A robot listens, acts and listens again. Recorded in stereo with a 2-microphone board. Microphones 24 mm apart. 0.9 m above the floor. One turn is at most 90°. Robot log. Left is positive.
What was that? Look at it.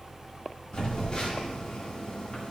note: The phone buzzing: about 40° left or 140° left.
cmd yaw +40
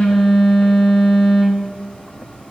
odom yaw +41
note: So it is at 100° left.
cmd yaw +90
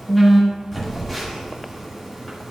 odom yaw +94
end: Found it: a phone buzzing, straight ahead, 1 to 2 m away.